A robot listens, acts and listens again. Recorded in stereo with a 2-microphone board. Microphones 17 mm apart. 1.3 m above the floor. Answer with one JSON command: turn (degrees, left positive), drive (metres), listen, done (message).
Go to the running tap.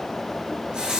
{"turn": -90}
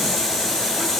{"turn": 15}
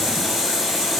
{"drive": 1.0}
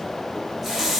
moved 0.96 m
{"turn": -10}
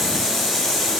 {"drive": 1.0}
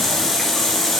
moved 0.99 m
{"drive": 1.0}
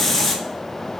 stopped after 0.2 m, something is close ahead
{"done": "I am next to the running tap."}